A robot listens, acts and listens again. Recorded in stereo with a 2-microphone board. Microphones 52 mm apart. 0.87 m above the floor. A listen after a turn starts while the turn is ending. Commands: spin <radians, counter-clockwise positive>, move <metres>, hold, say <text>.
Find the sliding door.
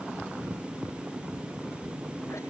hold
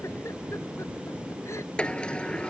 spin 0.35
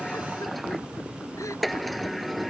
say Found it: a sliding door, straight ahead.